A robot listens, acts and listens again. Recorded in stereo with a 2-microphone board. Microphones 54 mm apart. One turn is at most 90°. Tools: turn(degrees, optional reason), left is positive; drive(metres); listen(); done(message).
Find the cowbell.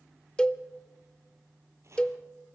turn(degrees=15, reason="The cowbell: about 15° left or 165° left.")
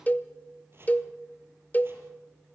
turn(degrees=90, reason="So it is at 150° left.")
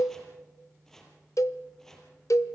turn(degrees=90, reason="The cowbell is now 95° left.")
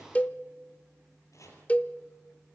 turn(degrees=30, reason="The cowbell is now 30° left.")
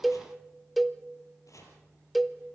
done("Facing the cowbell, under 1 m away.")